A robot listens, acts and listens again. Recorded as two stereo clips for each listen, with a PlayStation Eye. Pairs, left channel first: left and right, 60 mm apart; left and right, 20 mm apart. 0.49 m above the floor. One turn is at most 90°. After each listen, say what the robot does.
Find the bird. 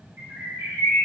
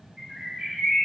Turn 70° right.
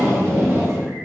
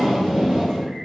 Keep listening.
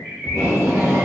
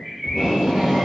Turn 25° right.
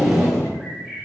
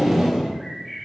Found it: a bird, straight ahead.